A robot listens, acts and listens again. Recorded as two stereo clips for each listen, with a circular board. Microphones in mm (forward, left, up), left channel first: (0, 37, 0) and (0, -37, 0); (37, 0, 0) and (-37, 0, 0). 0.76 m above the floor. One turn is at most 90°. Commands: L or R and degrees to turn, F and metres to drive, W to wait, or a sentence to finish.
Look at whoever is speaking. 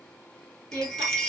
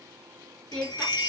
R70
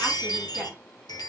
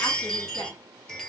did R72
W
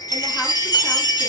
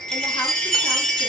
W
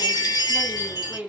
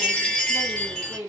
Facing the woman speaking, 1 to 2 m away.